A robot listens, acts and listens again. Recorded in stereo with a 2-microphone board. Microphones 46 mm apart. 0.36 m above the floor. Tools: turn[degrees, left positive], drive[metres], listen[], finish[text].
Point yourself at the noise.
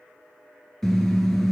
Action: turn[30]
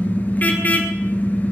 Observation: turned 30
Thought: So it is at 140° left.
Action: turn[140]
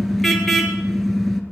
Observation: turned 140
Action: finish[Found it: a car horn, straight ahead, 2 to 4 m away.]